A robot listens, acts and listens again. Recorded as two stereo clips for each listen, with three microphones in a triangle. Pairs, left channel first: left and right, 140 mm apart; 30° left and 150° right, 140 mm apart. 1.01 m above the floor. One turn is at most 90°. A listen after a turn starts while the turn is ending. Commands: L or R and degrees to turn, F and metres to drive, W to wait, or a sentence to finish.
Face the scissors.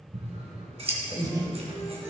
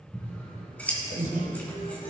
R50
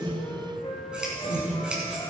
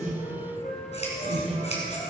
Facing the scissors.